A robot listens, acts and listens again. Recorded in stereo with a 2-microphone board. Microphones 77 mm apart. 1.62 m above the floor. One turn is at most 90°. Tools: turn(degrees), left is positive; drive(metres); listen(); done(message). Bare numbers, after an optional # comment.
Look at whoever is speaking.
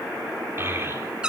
# The child speaking: about 30° right or 150° right.
turn(-30)
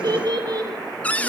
# So it is at 120° right.
turn(-90)
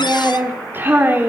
# The child speaking is now 30° right.
turn(-30)
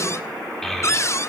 done("Facing the child speaking, over 4 m away.")